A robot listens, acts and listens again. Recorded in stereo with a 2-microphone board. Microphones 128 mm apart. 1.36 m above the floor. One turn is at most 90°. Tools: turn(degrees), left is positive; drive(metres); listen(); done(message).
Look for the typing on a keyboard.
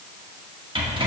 listen()
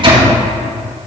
listen()
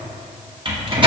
done("I can't make out typing on a keyboard, only a microwave.")